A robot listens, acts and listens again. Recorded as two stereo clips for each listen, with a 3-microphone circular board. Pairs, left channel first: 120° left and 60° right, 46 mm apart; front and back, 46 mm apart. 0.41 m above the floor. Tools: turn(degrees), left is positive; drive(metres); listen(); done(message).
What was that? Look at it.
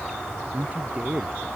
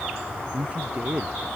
turn(degrees=-120)
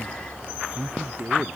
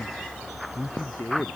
done("Found it: a man speaking, straight ahead.")